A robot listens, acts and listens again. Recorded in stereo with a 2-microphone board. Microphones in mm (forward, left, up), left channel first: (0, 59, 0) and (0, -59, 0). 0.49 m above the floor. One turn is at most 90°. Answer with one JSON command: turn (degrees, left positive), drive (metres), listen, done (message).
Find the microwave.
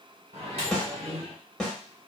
{"turn": -55}
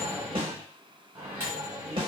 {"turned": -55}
{"turn": -30}
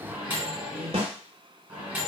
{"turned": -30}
{"turn": -15}
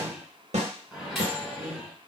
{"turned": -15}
{"done": "Facing the microwave."}